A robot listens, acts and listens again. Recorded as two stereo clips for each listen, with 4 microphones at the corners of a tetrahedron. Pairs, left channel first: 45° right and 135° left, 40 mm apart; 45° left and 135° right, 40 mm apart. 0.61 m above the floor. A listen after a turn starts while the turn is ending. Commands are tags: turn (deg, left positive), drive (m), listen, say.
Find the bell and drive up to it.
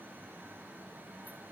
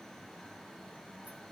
<listen/>
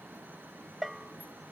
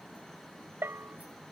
<turn deg="-145"/>
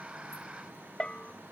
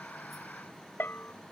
<turn deg="20"/>
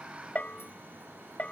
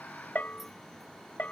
<drive m="1.0"/>
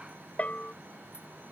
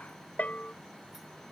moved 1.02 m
<drive m="1.0"/>
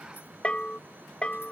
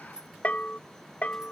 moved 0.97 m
<drive m="1.0"/>
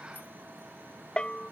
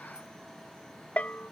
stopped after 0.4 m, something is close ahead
<turn deg="10"/>
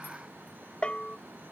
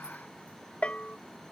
<say>Arrived at the bell, straight ahead.</say>